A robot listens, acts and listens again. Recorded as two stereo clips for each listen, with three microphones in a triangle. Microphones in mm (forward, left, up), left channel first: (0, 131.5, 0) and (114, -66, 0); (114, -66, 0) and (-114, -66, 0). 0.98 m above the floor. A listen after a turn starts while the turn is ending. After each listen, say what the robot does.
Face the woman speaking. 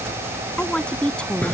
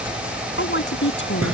Turn 35° left.
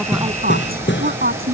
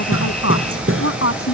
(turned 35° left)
Turn 10° right.
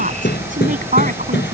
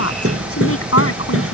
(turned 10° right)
Found it: a woman speaking, straight ahead.